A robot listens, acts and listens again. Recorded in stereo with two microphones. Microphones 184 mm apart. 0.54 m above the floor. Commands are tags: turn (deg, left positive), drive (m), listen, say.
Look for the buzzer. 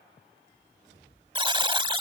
<turn deg="-25"/>
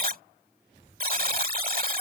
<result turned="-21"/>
<turn deg="-130"/>
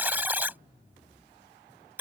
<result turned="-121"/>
<turn deg="-10"/>
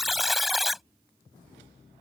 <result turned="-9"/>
<say>Facing the buzzer.</say>